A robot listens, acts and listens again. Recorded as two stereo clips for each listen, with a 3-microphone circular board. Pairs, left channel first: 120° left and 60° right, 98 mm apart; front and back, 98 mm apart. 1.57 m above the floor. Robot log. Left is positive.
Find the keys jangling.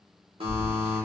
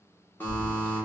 note: The keys jangling: 145° right.
cmd yaw -145
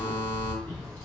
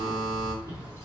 note: The keys jangling is now 60° left.
cmd yaw +60
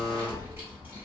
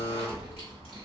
note: The keys jangling is now 10° left.
cmd yaw +10
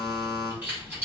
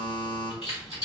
note: The keys jangling is now 15° left.
cmd yaw +15
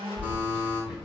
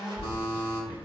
note: The keys jangling is now 10° left.
cmd yaw +10
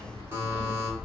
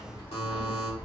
end: Found it: keys jangling, straight ahead, 2 to 4 m away.